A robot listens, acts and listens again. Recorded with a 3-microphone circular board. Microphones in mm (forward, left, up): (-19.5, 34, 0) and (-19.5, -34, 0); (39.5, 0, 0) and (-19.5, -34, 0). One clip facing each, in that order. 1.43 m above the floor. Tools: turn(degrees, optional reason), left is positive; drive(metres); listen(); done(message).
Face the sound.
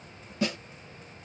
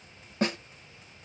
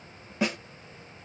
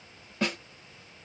turn(degrees=-50, reason="The snare drum: 50° right.")
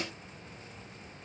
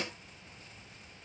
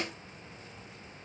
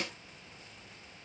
listen()
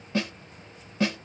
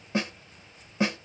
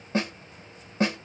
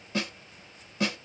turn(degrees=-20, reason="The snare drum is now 20° right.")
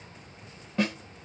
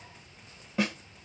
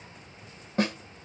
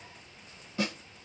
done("Facing the snare drum.")